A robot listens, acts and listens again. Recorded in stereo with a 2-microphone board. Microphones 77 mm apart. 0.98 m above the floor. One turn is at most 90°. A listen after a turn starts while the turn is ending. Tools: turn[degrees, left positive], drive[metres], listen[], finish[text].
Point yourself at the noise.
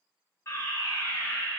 Thought: The fire alarm: about 35° left or 145° left.
Action: turn[35]
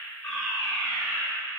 Action: finish[Facing the fire alarm.]